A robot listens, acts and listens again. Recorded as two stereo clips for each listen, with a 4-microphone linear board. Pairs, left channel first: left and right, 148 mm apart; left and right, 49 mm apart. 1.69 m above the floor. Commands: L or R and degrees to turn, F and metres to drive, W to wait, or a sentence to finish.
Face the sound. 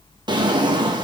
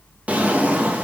R30
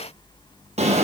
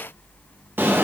R115
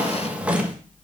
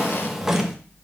R10
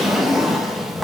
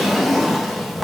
Found it: a drawer, straight ahead.